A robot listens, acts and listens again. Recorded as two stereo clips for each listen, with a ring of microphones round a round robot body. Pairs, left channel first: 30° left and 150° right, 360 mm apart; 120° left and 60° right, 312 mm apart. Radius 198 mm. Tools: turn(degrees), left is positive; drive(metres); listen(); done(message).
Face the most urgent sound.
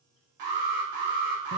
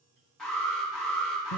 turn(degrees=-150)
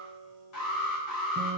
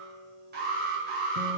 done("Found it: an alarm, straight ahead, 1 to 2 m away.")